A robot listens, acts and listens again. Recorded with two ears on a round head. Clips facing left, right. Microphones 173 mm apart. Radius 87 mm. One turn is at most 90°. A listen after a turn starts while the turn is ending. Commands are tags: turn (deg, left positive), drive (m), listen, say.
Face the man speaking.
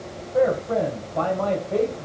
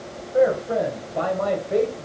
<turn deg="-30"/>
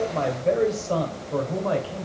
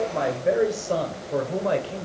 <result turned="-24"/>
<turn deg="-30"/>
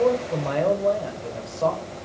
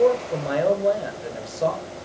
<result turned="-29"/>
<turn deg="-25"/>
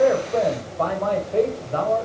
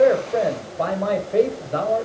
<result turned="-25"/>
<turn deg="-20"/>
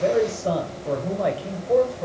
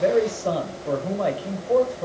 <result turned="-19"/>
<say>Found it: a man speaking, straight ahead.</say>